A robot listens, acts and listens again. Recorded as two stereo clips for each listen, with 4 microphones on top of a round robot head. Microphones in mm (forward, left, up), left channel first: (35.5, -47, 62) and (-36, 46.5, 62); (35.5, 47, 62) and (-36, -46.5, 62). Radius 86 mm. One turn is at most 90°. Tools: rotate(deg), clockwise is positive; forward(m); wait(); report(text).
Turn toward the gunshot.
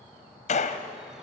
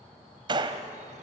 rotate(75)
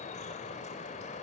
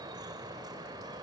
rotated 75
report("I heard a gunshot from this way, but can't make it out now.")